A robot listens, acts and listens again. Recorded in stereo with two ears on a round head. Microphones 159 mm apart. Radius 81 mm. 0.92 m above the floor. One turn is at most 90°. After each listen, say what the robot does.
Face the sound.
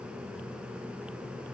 Keep listening.
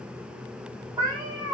Turn 20° right.
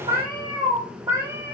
Turn 30° right.
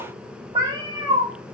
Turn 20° right.
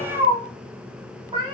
Turn 30° right.
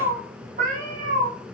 Turn 90° right.
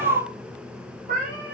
Turn 55° right.
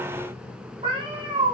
Turn 30° right.
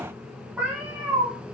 Turn 10° right.
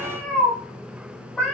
Found it: a cat meowing, straight ahead, 1 to 2 m away.